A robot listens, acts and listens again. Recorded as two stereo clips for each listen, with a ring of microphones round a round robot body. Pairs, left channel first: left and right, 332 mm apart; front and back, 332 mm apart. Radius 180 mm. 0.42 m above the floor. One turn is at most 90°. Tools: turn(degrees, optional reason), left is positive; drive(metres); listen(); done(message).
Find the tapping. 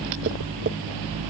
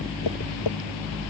turn(degrees=-35, reason="The tapping: 35° right.")
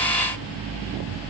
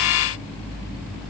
listen()
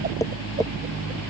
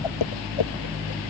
turn(degrees=10, reason="The tapping is now 10° left.")
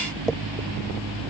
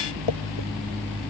done("Facing the tapping.")